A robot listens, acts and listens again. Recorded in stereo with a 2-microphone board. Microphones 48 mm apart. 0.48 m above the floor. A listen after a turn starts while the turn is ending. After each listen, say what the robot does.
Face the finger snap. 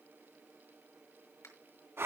Turn 90° left.
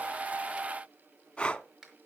Turn 10° right.
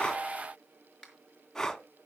Found it: a finger snap, straight ahead.